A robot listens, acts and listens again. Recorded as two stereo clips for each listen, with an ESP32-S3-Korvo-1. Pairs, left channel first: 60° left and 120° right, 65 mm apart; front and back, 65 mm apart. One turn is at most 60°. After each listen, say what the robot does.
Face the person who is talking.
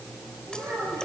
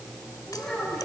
Turn 60° right.
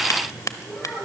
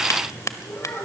Turn 35° right.
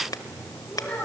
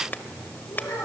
Found it: a child speaking, straight ahead.